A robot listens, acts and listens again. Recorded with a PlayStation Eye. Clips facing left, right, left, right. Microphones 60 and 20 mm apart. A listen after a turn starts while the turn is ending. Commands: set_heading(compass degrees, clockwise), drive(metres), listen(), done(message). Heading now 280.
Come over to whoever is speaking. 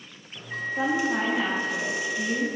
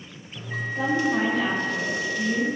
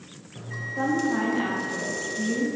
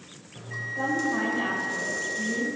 set_heading(240)
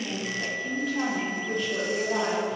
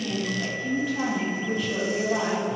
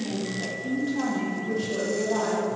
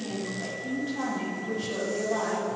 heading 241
drive(1.0)
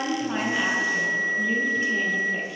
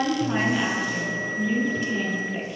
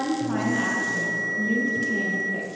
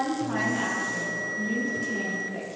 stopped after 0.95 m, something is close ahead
done("I am next to the woman speaking.")